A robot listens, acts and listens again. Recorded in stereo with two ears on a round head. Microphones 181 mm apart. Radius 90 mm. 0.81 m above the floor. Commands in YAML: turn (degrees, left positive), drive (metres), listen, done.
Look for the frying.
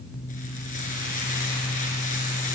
turn: 40
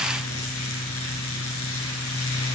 listen: true
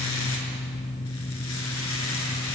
listen: true
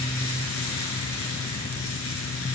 turn: 95
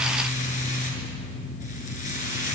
turn: 40
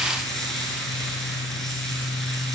done: "Facing the frying, over 4 m away."